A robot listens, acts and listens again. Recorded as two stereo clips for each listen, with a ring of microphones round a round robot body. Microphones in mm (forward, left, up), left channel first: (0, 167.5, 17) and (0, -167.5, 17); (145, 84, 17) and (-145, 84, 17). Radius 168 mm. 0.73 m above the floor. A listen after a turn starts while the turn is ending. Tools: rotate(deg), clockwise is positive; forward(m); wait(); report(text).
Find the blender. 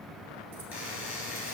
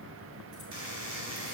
wait()
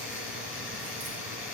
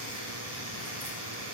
wait()
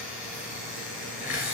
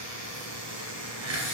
report("I can't make out a blender to turn to.")